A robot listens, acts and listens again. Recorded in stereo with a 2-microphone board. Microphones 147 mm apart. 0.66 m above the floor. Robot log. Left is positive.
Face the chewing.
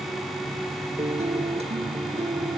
cmd idle
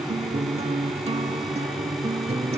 cmd idle
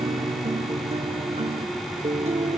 end: I can't make out chewing to turn to.